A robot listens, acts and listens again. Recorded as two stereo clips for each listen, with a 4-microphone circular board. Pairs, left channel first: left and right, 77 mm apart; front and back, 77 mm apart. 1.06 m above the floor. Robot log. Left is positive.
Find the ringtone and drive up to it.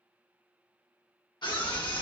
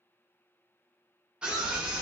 cmd idle
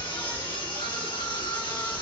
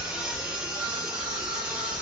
cmd idle
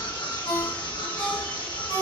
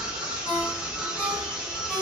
note: The ringtone: 70° left.
cmd yaw +70
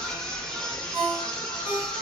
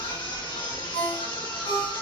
note: The ringtone is now 20° right.
cmd yaw -20
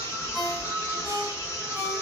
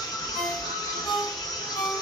cmd fwd 1.0
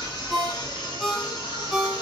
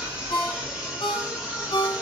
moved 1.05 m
cmd fwd 1.0
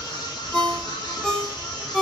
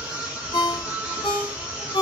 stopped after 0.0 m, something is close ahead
note: The ringtone is now 10° left.
cmd yaw +10
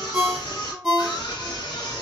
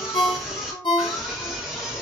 end: I am next to the ringtone.